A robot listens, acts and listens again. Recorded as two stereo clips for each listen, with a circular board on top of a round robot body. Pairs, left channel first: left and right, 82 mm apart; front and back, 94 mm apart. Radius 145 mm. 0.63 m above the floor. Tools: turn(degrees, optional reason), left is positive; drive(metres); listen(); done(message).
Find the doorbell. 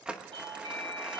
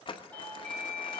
turn(degrees=-75, reason="The doorbell: 75° right.")
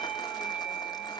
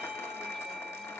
done("Found it: a doorbell, straight ahead, over 4 m away.")